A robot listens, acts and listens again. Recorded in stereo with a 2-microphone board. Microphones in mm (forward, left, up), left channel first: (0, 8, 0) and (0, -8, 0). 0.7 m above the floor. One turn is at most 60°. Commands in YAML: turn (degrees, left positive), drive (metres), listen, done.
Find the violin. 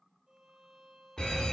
turn: -30
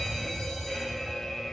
listen: true
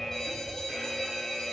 listen: true
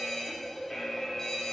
done: "I heard a violin, but can't make it out now. It was about straight ahead or 120° right."